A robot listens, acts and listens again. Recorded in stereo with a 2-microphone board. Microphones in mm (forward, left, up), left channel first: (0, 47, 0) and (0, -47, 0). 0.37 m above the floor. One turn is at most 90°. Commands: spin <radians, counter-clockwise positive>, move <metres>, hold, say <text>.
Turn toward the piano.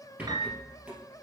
spin -0.79
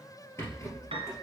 spin -1.57
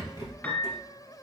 spin 0.26
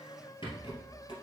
hold
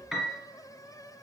say Facing the piano.